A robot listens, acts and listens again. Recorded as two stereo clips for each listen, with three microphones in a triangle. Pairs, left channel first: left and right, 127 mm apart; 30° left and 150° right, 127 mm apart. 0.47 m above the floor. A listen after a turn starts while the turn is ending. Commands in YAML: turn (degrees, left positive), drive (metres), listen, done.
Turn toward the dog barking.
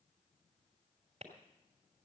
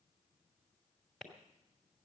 listen: true
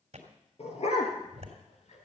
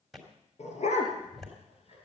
turn: 60
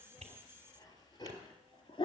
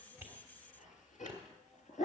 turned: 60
turn: 40
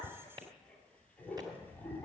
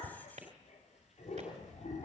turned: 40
turn: 15
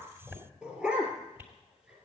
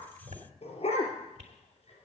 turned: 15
done: "Facing the dog barking."